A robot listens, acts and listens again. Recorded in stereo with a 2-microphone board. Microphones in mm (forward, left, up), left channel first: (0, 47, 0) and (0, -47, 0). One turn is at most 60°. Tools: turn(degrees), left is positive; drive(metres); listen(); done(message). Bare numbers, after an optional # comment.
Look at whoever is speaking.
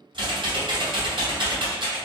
listen()
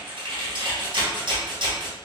listen()
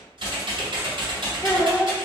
# The child speaking: about 30° left or 150° left.
turn(30)
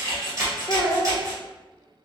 # So it is at 115° left.
turn(60)
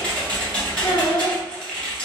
# The child speaking is now 70° left.
turn(60)
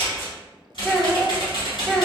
done("Facing the child speaking, under 1 m away.")